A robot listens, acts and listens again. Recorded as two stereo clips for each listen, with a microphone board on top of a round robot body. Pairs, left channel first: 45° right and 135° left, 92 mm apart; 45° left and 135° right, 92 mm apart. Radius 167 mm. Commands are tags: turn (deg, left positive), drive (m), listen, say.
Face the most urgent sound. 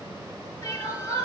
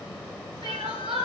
<turn deg="-105"/>
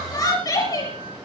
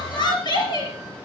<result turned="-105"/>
<say>Found it: crying, straight ahead, over 4 m away.</say>